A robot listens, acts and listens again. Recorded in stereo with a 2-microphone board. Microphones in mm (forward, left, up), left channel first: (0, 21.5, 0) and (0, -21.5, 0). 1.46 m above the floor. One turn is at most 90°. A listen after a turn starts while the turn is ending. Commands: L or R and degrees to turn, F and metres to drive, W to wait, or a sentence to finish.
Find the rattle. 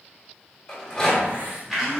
L30
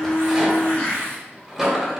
R15
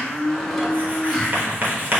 W
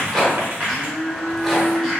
Facing the rattle.